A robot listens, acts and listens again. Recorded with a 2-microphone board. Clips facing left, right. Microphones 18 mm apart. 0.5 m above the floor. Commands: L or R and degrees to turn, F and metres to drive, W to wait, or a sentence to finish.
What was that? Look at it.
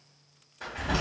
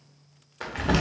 R55
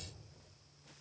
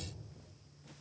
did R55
W
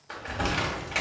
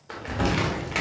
R15
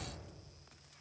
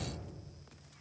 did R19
W
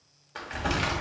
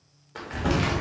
Facing the crumpling.